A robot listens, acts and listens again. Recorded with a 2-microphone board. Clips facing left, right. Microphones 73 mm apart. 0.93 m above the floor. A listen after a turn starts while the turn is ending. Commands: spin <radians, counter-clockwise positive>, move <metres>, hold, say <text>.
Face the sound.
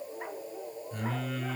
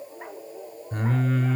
spin -0.87
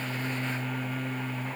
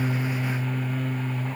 say Found it: singing, straight ahead, 1 to 2 m away.